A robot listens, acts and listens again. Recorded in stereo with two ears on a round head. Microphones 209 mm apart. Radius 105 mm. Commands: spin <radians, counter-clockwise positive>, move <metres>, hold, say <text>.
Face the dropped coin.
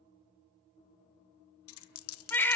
spin 1.13
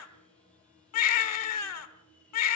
hold
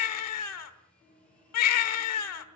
say I heard a dropped coin, but can't make it out now. It was about straight ahead or 50° left.